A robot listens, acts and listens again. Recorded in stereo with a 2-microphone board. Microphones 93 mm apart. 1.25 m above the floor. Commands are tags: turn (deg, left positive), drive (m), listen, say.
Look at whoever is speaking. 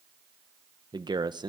<turn deg="-55"/>
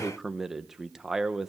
<say>Facing the man speaking, under 1 m away.</say>